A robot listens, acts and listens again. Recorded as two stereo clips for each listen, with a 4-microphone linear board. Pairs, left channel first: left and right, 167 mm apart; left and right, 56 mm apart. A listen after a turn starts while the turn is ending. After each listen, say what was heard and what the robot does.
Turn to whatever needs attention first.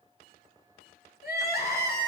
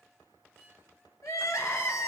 Turn 90° left.
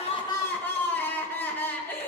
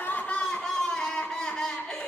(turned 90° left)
So it is at 10° left. Turn 10° left.
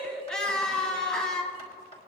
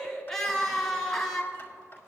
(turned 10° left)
Facing the crying, 1 to 2 m away.